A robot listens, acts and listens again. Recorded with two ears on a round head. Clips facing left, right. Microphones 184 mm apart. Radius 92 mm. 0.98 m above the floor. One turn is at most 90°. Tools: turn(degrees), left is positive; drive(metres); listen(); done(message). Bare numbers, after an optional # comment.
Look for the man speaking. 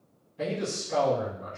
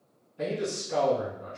turn(30)
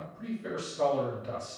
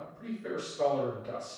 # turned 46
# So it is at 135° left.
turn(90)
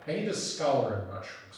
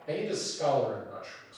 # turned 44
# The man speaking is now 90° left.
turn(90)
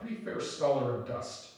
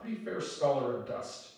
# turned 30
# The man speaking is now 60° left.
turn(60)
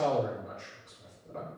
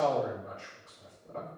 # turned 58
done("Facing the man speaking, 2 to 4 m away.")